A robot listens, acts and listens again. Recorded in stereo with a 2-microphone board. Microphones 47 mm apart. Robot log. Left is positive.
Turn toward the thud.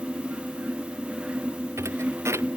cmd yaw -90
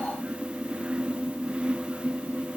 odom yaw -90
end: I heard a thud from this way, but can't make it out now.